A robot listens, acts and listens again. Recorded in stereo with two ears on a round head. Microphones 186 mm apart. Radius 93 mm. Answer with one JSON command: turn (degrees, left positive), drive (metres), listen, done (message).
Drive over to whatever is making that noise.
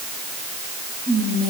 {"turn": -20}
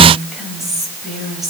{"drive": 1.0}
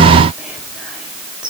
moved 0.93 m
{"drive": 1.0}
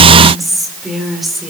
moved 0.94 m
{"drive": 1.0}
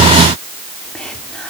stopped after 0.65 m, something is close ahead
{"done": "I am next to the whispering."}